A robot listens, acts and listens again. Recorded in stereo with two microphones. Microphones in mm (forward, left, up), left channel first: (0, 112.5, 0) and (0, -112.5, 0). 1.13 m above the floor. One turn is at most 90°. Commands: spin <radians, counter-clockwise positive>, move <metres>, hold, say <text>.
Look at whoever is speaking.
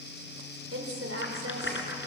spin -1.57
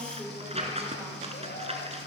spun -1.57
say Facing the woman speaking, over 4 m away.